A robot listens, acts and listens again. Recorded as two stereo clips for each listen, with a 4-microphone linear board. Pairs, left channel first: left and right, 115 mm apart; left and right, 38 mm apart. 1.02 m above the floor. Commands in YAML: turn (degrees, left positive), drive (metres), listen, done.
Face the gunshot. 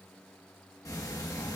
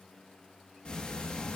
listen: true
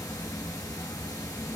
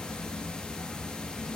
listen: true
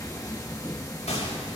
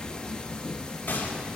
turn: 70
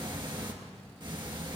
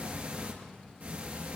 listen: true
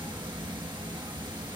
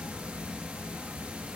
done: "I heard a gunshot, but can't make it out now. It was about straight ahead or 40° left."